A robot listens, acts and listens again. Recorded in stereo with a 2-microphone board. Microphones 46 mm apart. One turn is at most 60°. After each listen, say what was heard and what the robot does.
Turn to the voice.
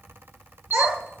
Turn 60° right.
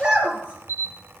So it is at 25° right. Turn 25° right.
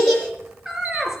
The child speaking is now 10° right. Turn 10° right.
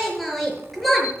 Facing the child speaking.